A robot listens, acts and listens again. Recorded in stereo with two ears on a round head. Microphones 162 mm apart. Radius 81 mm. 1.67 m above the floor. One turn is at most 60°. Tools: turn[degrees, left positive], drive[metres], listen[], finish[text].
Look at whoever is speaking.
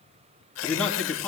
Action: turn[30]
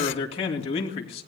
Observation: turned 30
Thought: So it is at 145° left.
Action: turn[60]
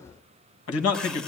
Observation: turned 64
Thought: The man speaking is now 85° left.
Action: turn[60]
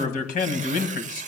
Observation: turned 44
Thought: The man speaking is now 45° left.
Action: turn[45]
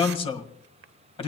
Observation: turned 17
Thought: The man speaking is now 30° left.
Action: turn[30]
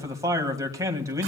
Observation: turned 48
Thought: The man speaking is now 20° right.
Action: turn[-20]
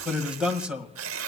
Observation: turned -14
Action: finish[Facing the man speaking.]